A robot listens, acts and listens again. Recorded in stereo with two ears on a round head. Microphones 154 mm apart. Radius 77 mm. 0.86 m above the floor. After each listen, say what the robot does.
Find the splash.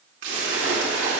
Turn 90° right.
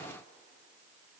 I heard a splash from this way, but can't make it out now.